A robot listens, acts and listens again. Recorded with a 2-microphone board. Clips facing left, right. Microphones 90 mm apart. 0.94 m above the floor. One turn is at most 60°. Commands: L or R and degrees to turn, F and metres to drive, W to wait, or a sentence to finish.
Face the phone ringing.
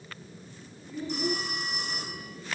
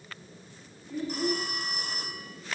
R45
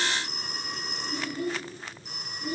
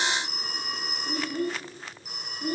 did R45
Found it: a phone ringing, straight ahead, over 4 m away.